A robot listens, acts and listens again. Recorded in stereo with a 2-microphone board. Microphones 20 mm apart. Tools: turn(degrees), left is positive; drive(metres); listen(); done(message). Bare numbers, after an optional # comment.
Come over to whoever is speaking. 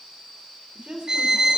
# The woman speaking: about 70° right or 110° right.
turn(-70)
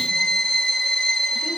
listen()
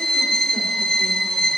listen()
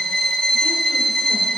done("I heard a woman speaking, but can't make it out now. It was about straight ahead or 40° right. I did not reach it.")